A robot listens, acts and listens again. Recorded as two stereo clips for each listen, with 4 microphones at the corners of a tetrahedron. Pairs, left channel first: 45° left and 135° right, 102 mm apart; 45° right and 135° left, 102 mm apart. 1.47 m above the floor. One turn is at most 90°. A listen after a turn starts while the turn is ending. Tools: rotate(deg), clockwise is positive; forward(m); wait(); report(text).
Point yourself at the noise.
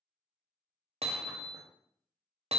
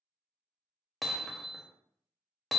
rotate(90)
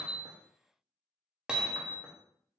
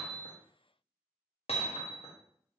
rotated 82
rotate(50)
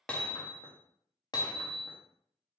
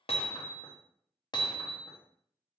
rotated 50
report("Found it: hammering, straight ahead, under 1 m away.")